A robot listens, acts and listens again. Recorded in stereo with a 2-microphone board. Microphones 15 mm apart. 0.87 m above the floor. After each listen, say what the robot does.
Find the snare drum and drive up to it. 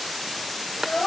Keep listening.
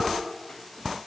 Keep listening.
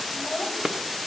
I can't make out a snare drum to turn to.